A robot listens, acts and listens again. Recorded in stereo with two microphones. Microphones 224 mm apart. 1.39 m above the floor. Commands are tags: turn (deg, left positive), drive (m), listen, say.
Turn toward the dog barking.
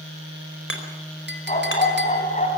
<turn deg="35"/>
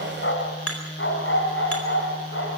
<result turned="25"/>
<turn deg="115"/>
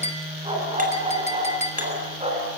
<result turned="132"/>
<turn deg="-25"/>
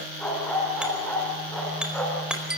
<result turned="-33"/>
<say>Found it: a dog barking, straight ahead, over 4 m away.</say>